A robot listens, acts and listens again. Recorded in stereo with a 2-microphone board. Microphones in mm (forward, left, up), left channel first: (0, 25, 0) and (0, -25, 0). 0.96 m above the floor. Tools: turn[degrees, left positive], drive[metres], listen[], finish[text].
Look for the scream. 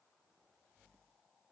Action: listen[]
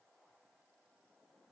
Action: listen[]
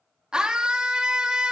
Thought: The scream: about 15° right or 165° right.
Action: turn[-15]
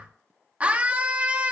Thought: So it is at 155° right.
Action: turn[-155]
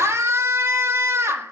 Thought: The scream is now 60° right.
Action: turn[-60]
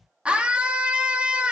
Thought: The scream is now 20° right.
Action: turn[-20]
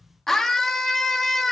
Action: finish[Found it: a scream, straight ahead.]